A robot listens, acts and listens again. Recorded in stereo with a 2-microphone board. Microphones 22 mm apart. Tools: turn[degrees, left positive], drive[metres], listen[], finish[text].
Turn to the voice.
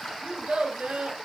Action: turn[-90]
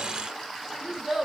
Action: finish[Facing the child speaking.]